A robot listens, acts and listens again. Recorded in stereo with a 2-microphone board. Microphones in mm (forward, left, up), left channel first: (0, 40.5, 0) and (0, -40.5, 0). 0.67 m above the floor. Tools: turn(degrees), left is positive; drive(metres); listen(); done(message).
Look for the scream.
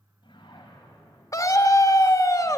turn(degrees=40)
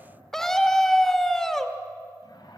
done("Found it: a scream, straight ahead.")